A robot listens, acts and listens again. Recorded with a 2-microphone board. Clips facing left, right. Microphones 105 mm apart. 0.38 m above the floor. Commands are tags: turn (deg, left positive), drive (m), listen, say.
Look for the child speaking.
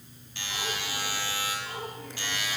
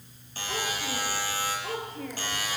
<turn deg="-90"/>
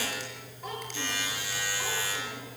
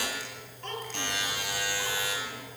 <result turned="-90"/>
<say>Facing the child speaking.</say>